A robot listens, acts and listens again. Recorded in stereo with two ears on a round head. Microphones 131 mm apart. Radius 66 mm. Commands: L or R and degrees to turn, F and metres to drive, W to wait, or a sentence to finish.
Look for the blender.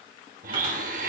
R60
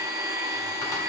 R25
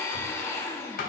L20
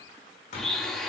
Facing the blender, under 1 m away.